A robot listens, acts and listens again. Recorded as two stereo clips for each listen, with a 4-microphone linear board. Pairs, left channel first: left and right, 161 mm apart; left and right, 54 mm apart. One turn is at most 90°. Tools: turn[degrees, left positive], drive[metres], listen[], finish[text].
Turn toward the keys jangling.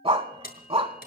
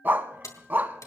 Thought: The keys jangling: about 70° left or 110° left.
Action: turn[70]
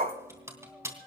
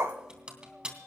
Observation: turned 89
Thought: So it is at 15° right.
Action: turn[-15]
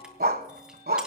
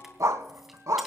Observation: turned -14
Action: listen[]
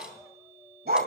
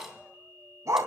Action: listen[]
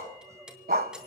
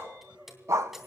Action: finish[Facing the keys jangling.]